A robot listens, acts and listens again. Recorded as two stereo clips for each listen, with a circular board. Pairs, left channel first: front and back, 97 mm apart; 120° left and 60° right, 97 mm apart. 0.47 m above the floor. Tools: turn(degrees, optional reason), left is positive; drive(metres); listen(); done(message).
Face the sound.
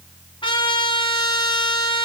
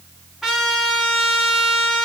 turn(degrees=25, reason="The trumpet: 25° left.")
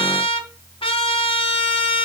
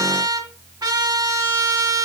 turn(degrees=-15, reason="The trumpet is now 15° right.")
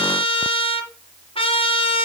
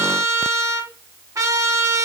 done("Facing the trumpet.")